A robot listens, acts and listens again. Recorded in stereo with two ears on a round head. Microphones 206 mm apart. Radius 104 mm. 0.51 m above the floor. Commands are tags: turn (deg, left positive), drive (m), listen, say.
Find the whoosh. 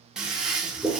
<listen/>
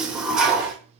<listen/>
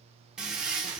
<say>I can't make out a whoosh to turn to.</say>